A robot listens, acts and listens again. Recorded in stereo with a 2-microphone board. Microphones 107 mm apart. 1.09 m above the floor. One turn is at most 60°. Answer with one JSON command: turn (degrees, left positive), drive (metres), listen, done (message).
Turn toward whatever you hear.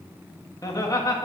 {"turn": 30}
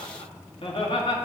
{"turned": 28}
{"turn": 60}
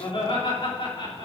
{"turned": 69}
{"turn": 55}
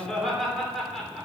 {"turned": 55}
{"done": "Found it: laughter, straight ahead."}